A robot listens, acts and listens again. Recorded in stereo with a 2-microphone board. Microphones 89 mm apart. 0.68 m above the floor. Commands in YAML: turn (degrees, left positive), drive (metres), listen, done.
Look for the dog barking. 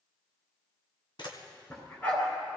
turn: 20
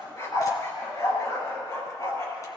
turn: 135
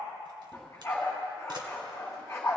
turn: 30
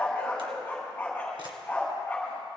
turn: 20
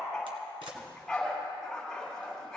done: "Found it: a dog barking, straight ahead."